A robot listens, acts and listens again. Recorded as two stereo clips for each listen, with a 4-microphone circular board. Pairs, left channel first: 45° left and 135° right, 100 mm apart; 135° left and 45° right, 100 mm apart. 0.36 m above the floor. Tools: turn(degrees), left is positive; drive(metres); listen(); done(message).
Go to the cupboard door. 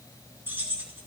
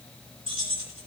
listen()
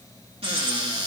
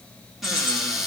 turn(degrees=-130)
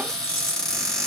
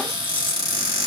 turn(degrees=-40)
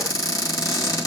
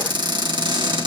drive(metres=1.0)
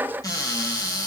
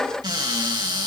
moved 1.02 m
drive(metres=1.0)
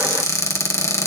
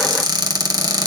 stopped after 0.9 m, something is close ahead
turn(degrees=-10)
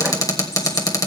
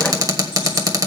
done("Arrived at the cupboard door, straight ahead.")